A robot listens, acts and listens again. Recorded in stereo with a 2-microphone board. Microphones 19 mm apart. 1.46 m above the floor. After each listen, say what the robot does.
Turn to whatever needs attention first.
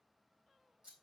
Keep listening.
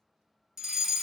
Turn 25° right.
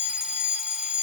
Turn 125° right.
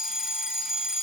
Turn 25° right.
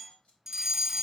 Turn 15° right.
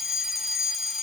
Found it: a fire alarm, straight ahead, 1 to 2 m away.